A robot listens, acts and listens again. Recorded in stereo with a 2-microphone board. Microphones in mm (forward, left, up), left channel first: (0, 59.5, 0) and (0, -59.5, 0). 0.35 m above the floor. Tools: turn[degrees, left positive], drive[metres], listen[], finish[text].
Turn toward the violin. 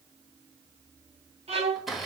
Thought: The violin: about 60° right or 120° right.
Action: turn[-60]
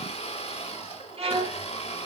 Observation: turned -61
Thought: So it is at 55° right.
Action: turn[-55]
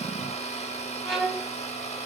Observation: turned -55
Action: finish[Facing the violin, 1 to 2 m away.]